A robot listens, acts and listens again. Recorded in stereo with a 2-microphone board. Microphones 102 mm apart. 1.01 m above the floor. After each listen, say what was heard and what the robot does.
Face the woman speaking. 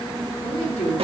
The woman speaking: about 75° left or 105° left. Turn 75° left.
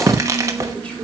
Keep listening.
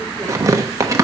Keep listening.
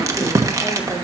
I heard a woman speaking, but can't make it out now. It was about straight ahead or 30° left.